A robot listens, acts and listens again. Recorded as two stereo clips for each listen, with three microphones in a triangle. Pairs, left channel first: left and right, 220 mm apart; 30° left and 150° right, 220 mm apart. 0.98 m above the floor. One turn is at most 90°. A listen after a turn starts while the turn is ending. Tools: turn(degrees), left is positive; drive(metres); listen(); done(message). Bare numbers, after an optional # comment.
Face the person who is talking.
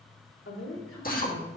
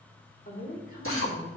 # The woman speaking: 80° left.
turn(80)
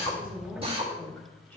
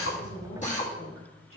# The woman speaking is now 10° left.
turn(10)
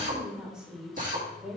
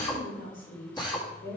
done("Found it: a woman speaking, straight ahead.")